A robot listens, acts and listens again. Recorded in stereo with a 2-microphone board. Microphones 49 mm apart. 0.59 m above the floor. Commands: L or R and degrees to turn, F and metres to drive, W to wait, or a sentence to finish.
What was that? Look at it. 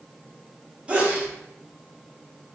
R30
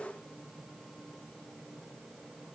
W
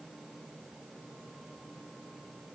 I heard a sneeze, but can't make it out now. It was about straight ahead or 120° right.